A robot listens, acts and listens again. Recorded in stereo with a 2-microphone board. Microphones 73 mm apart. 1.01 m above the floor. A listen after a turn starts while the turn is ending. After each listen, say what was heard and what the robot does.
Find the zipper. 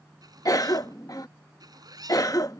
The zipper: about 65° right or 115° right. Turn 65° right.
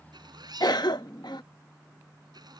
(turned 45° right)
So it is at 75° right. Turn 75° right.
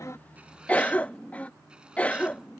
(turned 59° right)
Nothing new. It was at 15° right. Turn 15° right.
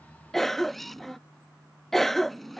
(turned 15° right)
Found it: a zipper, straight ahead.